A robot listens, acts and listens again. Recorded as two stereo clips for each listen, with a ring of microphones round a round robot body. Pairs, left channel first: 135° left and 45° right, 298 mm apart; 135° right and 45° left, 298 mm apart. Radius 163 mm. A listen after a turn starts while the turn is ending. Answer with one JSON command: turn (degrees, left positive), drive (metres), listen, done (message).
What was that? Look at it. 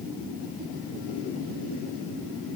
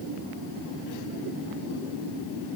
{"listen": true}
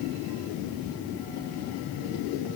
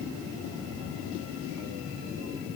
{"listen": true}
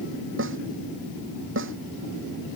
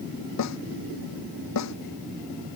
{"turn": -95}
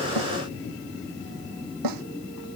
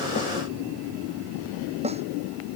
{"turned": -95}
{"turn": -25}
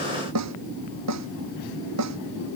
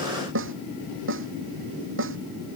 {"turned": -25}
{"done": "Found it: a snare drum, straight ahead."}